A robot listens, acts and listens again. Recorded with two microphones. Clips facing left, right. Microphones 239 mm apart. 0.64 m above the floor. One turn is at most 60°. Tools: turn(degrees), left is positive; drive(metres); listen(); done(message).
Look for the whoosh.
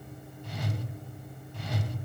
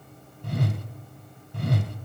turn(degrees=-60)
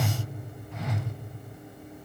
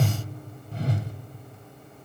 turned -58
turn(degrees=-45)
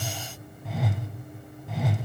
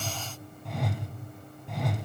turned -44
done("Facing the whoosh.")